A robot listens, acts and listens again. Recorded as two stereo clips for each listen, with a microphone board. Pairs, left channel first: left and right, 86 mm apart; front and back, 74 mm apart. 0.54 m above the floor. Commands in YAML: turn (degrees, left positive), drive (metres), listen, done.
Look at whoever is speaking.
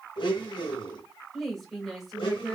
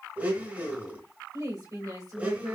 turn: 180
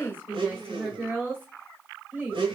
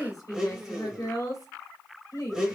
turn: -30
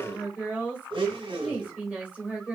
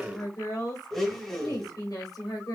turn: -20
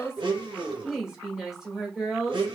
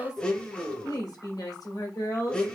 turn: -10
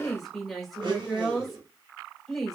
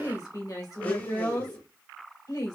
done: "Found it: a woman speaking, straight ahead, 2 to 4 m away."